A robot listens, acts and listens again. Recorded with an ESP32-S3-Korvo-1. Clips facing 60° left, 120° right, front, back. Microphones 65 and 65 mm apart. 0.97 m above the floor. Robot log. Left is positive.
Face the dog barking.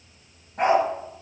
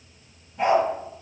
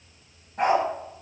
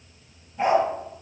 note: The dog barking: 35° left.
cmd yaw +35
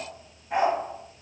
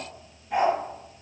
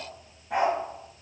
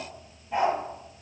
end: Facing the dog barking, 2 to 4 m away.